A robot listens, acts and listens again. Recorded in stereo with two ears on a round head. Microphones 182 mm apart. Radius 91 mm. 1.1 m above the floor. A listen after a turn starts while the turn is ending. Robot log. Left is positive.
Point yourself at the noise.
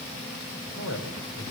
note: The man speaking: about 75° left or 105° left.
cmd yaw +75
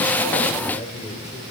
note: So it is at 30° left.
cmd yaw +30
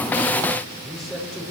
end: Facing the man speaking, over 4 m away.